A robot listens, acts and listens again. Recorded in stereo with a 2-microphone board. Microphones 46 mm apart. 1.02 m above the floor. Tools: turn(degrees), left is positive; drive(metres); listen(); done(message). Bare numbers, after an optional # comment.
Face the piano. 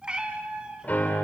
# The piano: about 40° left or 140° left.
turn(40)
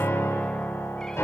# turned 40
# So it is at 100° left.
turn(100)
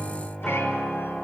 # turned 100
# The piano is now 10° left.
turn(10)
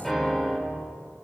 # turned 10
done("Facing the piano, 2 to 4 m away.")